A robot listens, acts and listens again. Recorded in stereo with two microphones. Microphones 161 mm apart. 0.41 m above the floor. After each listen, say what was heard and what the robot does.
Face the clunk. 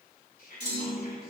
The clunk: about 30° right or 150° right. Turn 30° right.
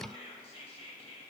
Keep listening.
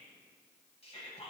I heard a clunk, but can't make it out now. It was about straight ahead or 120° right.